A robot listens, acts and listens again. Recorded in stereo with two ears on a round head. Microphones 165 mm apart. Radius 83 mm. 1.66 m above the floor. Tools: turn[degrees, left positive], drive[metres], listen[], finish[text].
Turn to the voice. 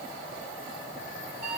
Action: listen[]
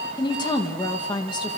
Thought: The woman speaking: about 25° left or 155° left.
Action: turn[25]
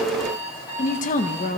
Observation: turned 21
Thought: So it is at 135° left.
Action: turn[135]
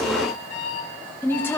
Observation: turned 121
Thought: The woman speaking is now 10° left.
Action: turn[10]
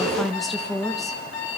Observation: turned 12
Action: finish[Found it: a woman speaking, straight ahead.]